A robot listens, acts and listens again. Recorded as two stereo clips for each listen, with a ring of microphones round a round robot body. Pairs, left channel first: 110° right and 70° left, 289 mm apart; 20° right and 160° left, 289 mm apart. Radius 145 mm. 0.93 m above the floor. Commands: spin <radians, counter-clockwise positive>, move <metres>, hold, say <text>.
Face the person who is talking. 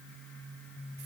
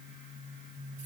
hold
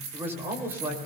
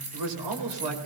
spin 2.62
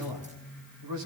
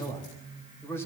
spin 1.05
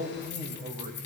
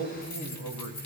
say Found it: a man speaking, straight ahead, over 4 m away.